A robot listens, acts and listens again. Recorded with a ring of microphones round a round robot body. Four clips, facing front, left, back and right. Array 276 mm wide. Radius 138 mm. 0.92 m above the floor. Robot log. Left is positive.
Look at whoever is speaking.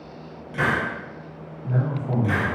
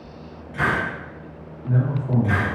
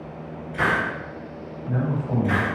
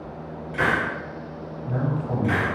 note: The man speaking: 15° left.
cmd yaw +15
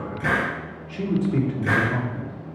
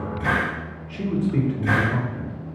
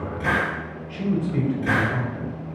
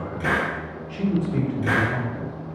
end: Facing the man speaking.